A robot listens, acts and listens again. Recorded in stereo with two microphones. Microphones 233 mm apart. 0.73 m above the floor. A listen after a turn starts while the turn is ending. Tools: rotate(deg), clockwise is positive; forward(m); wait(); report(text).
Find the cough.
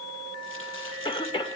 rotate(-20)
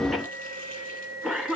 report("Found it: a cough, straight ahead.")